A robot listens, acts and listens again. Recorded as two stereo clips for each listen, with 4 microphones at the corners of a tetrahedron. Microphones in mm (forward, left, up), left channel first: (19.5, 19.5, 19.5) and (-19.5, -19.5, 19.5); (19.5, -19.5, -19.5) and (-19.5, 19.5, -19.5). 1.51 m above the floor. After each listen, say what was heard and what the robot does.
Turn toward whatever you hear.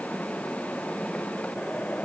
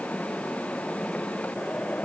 Keep listening.
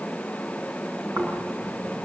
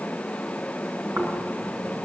The snoring: 170° left. Turn 170° left.
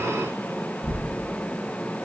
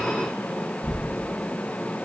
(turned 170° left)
Found it: snoring, straight ahead, over 4 m away.